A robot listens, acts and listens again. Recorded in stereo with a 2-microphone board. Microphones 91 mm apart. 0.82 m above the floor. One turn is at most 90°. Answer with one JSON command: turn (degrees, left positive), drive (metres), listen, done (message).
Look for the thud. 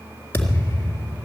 {"turn": 25}
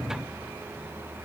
{"listen": true}
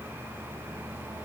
{"done": "I heard a thud, but can't make it out now. It was about straight ahead or 130° left."}